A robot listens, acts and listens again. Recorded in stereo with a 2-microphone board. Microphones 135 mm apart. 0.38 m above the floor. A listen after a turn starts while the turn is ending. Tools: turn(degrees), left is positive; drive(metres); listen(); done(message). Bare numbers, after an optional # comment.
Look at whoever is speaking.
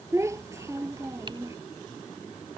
# The child speaking: about 20° right or 160° right.
turn(-20)
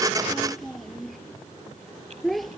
done("Found it: a child speaking, straight ahead.")